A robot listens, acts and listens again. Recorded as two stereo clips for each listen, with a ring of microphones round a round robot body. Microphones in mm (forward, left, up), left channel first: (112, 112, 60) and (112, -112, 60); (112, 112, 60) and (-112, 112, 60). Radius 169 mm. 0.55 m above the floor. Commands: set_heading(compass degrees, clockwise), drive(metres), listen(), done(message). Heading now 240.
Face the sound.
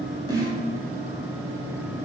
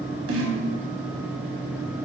set_heading(70)
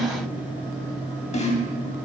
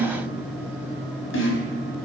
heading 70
set_heading(40)
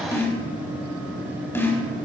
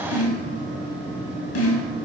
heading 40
set_heading(30)
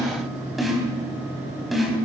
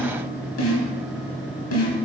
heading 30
done("Facing the snare drum.")